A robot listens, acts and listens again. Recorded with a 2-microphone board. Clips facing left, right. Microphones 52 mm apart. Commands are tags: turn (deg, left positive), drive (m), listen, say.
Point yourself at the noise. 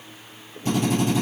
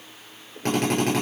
<turn deg="-90"/>
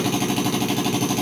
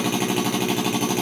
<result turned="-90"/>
<turn deg="-15"/>
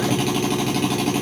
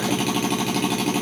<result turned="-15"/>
<say>Facing the drill, over 4 m away.</say>